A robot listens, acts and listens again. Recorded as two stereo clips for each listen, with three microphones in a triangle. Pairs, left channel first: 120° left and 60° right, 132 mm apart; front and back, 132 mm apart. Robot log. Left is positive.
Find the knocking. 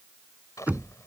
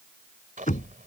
note: The knocking: 20° left.
cmd yaw +20
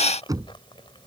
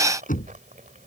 end: Found it: knocking, straight ahead.